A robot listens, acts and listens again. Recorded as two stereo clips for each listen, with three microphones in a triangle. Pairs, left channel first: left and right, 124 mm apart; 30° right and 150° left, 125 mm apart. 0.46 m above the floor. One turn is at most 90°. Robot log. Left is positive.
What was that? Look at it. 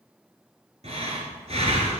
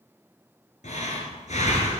note: The breathing: 55° right.
cmd yaw -55
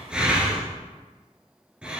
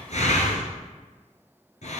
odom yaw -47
note: The breathing is now 10° right.
cmd yaw -10
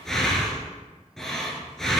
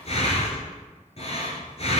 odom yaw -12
end: Facing the breathing, 1 to 2 m away.